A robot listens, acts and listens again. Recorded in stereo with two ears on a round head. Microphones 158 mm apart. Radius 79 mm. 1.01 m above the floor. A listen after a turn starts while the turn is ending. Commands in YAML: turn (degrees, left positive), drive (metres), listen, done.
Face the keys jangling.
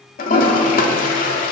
listen: true
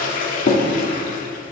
listen: true
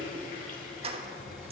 turn: -35
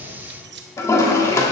turn: -110
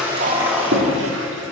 done: "Facing the keys jangling."